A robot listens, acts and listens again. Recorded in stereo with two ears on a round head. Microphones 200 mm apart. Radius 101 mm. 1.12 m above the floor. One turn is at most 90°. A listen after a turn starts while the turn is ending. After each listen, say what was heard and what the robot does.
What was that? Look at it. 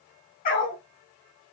The dog barking: about 40° left or 140° left. Turn 40° left.
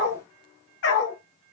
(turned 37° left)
So it is at 115° left. Turn 90° left.
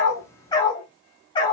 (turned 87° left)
The dog barking is now 20° left. Turn 20° left.
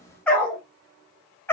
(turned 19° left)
The dog barking is now 10° left. Turn 10° left.
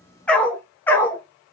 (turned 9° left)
The dog barking is now 10° left. Turn 10° left.
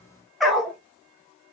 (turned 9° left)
Facing the dog barking, 1 to 2 m away.